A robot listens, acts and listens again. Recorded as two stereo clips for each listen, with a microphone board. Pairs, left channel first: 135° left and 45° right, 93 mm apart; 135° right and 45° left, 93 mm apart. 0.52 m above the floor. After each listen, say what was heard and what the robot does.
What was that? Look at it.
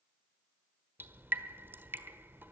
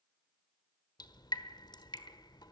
The dripping: 110° right. Turn 110° right.
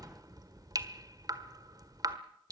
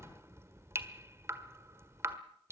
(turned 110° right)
The dripping is now 10° right. Turn 10° right.
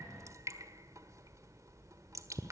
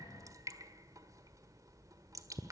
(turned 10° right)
Found it: dripping, straight ahead.